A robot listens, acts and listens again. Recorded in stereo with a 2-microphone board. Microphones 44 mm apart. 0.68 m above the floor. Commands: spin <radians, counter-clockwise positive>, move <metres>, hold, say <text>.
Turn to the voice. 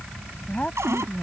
spin 0.52
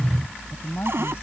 spin 2.09
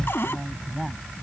say Found it: a woman speaking, straight ahead.